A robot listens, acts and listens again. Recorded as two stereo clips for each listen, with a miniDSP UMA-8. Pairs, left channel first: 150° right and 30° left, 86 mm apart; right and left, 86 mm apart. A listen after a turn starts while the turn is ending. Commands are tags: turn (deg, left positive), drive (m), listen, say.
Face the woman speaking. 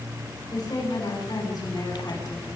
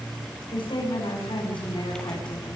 <turn deg="-120"/>
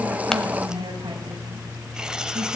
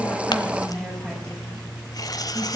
<turn deg="-10"/>
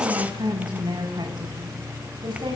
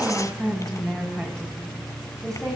<say>Facing the woman speaking.</say>